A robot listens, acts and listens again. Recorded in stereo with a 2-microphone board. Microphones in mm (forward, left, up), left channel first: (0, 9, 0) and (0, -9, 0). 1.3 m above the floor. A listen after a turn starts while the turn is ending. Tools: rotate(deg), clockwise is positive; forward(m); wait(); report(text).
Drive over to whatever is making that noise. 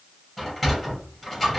rotate(-30)
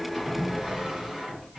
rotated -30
rotate(30)
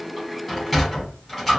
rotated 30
forward(1.0)
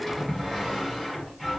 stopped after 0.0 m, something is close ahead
report("Something is in my way. I am facing the sliding door but have not reached it.")